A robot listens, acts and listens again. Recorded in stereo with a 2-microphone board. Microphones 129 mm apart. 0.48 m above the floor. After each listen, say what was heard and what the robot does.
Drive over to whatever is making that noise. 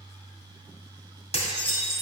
The dishes clattering: about 55° left or 125° left. Turn 55° left.
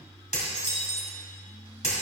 So it is at 70° left. Turn 70° left.
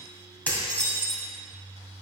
The dishes clattering is now 15° left. Turn 15° left.
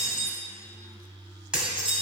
Drive 1.0 m forward.
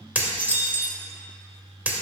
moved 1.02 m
The dishes clattering is now 15° right. Turn 15° right.
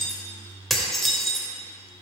Drive 1.0 m forward.
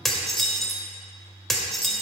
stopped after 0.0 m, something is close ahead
Arrived at the dishes clattering, straight ahead.